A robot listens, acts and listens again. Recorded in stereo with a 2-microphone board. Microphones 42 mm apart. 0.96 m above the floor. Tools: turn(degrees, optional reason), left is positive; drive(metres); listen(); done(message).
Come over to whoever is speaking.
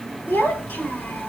turn(degrees=90)
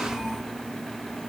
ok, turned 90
drive(metres=1.0)
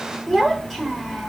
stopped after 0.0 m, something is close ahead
done("Blocked. The child speaking is further on, straight ahead.")